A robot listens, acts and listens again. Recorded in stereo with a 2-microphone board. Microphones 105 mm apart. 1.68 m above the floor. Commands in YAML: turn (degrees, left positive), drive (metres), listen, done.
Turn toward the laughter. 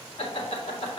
turn: 75
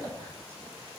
listen: true
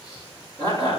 turn: 55
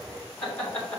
turn: 15
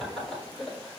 done: "Facing the laughter, 2 to 4 m away."